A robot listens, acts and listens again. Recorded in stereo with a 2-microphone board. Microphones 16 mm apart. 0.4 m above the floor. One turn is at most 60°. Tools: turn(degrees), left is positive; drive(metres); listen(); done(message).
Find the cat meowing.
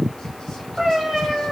turn(degrees=-30)
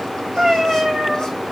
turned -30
turn(degrees=-60)
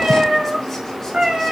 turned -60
turn(degrees=-60)
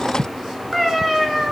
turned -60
turn(degrees=-10)
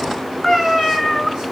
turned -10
done("Facing the cat meowing.")